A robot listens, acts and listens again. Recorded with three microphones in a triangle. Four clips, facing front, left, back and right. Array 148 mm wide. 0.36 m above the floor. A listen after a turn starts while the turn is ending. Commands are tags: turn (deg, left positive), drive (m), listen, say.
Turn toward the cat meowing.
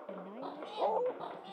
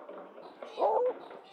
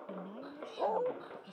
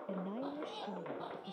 <turn deg="-10"/>
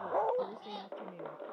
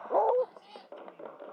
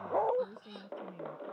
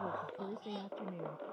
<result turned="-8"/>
<say>Facing the cat meowing.</say>